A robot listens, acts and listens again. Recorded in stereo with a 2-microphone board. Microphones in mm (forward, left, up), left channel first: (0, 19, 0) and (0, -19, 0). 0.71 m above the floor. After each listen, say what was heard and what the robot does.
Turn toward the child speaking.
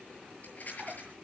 Keep listening.
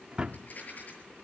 Keep listening.
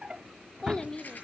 The child speaking: about 15° left or 165° left. Turn 15° left.
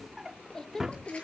Turn 30° left.
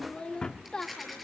The child speaking: about 20° left or 160° left. Turn 20° left.
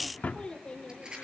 The child speaking: about 25° left or 155° left. Turn 25° left.
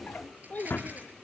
So it is at 130° left. Turn 130° left.
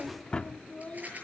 The child speaking is now 40° left. Turn 40° left.
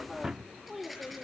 Facing the child speaking, 1 to 2 m away.